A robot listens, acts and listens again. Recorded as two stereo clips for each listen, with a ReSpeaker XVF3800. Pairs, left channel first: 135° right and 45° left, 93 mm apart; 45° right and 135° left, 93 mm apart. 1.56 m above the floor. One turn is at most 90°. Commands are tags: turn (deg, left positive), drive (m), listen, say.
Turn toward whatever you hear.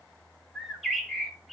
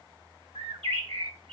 <turn deg="90"/>
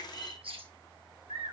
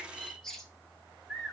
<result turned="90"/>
<turn deg="40"/>
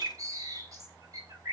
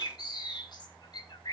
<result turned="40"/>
<say>Found it: a bird, straight ahead, 1 to 2 m away.</say>